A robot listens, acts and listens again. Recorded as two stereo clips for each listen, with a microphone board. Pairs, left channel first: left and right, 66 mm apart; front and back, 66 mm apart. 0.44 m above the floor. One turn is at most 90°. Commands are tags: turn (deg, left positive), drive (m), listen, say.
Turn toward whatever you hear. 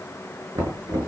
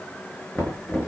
<turn deg="-80"/>
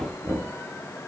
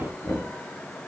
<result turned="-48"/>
<turn deg="-35"/>
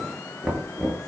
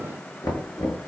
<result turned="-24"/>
<turn deg="-10"/>
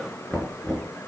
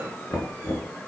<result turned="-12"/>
<say>Found it: knocking, straight ahead.</say>